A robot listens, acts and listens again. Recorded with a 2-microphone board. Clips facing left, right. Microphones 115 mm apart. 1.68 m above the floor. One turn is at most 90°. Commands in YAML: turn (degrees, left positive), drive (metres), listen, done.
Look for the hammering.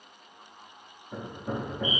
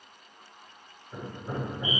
turn: 70
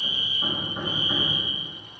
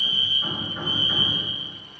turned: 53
turn: 30
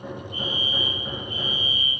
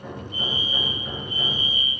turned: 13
turn: 15
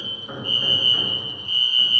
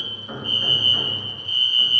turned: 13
done: "Facing the hammering, 2 to 4 m away."